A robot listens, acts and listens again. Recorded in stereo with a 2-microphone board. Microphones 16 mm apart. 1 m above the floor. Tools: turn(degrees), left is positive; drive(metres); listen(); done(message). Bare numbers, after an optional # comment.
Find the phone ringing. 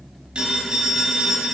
turn(-90)
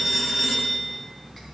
# So it is at 10° right.
turn(-10)
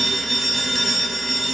done("Facing the phone ringing.")